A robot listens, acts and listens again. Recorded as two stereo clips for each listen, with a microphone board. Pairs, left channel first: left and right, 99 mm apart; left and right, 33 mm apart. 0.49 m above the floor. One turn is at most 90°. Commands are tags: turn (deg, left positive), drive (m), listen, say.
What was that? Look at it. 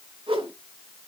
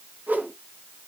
<turn deg="-70"/>
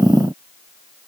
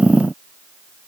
<listen/>
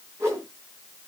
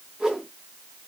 <turn deg="-30"/>
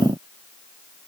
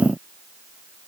<listen/>
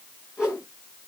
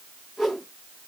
<turn deg="-10"/>
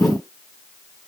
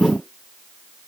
<listen/>
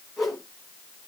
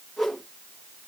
<say>Facing the whoosh.</say>